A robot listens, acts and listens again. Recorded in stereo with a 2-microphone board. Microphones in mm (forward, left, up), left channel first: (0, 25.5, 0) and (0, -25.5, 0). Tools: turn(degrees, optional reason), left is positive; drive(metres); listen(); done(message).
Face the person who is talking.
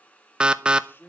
turn(degrees=50, reason="The man speaking: about 50° left or 130° left.")
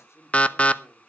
turn(degrees=70, reason="So it is at 70° left.")
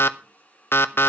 listen()
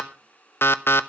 listen()
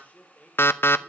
turn(degrees=30, reason="The man speaking is now 30° left.")
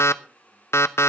listen()
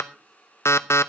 listen()
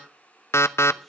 done("Facing where the man speaking came from. I can't hear it now.")